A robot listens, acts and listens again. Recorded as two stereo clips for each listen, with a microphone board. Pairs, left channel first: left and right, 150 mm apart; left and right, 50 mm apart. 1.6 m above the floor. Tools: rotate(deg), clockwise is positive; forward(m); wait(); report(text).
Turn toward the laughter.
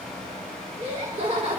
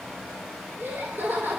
rotate(50)
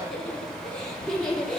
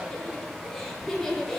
report("Found it: laughter, straight ahead, 2 to 4 m away.")